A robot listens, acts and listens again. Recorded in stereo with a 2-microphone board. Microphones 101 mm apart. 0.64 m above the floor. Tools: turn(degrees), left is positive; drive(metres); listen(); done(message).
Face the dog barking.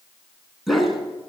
turn(degrees=30)
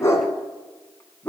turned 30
turn(degrees=160)
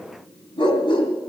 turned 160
turn(degrees=55)
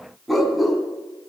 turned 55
done("Found it: a dog barking, straight ahead, 2 to 4 m away.")